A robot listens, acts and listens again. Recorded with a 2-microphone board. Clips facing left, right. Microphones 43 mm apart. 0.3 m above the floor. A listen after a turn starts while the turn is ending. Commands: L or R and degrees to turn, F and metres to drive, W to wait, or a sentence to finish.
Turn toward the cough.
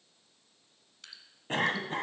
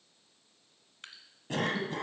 L40
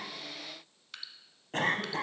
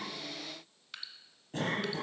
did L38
L95
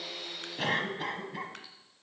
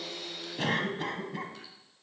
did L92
Found it: a cough, straight ahead, 1 to 2 m away.